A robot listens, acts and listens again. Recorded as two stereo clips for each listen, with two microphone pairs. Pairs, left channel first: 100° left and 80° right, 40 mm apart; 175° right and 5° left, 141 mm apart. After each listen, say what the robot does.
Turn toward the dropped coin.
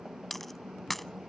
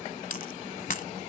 Turn 175° right.
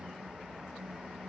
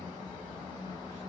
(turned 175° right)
Facing where the dropped coin came from. I can't hear it now.